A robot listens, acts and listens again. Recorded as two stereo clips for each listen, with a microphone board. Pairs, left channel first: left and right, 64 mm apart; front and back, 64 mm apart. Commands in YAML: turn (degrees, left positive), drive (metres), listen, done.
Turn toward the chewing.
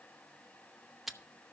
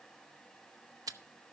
turn: -175
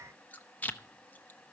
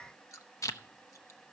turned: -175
turn: 30
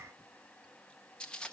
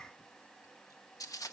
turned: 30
turn: 15
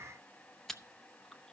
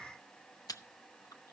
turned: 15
done: "Facing the chewing."